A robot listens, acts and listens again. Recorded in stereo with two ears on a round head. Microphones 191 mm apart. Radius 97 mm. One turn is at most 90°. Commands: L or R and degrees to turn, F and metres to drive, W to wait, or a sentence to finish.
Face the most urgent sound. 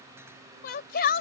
L50
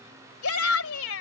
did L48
L80
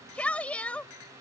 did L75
Facing the shout.